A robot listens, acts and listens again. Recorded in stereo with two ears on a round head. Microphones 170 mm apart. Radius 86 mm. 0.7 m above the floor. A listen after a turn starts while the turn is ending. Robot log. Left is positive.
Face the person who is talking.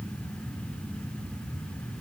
cmd idle
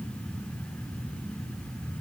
cmd idle
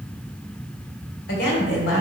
note: The woman speaking: about 60° left or 120° left.
cmd yaw +60
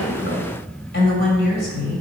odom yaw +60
note: So it is at 50° left.
cmd yaw +50
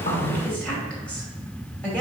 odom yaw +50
end: Facing the woman speaking, 2 to 4 m away.